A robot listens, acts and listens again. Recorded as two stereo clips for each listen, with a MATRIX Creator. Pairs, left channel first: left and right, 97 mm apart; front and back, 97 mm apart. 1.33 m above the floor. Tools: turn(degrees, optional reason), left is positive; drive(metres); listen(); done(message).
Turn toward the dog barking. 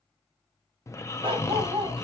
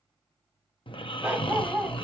turn(degrees=-100, reason="The dog barking: 100° right.")
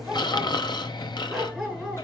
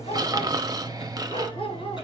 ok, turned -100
done("Facing the dog barking.")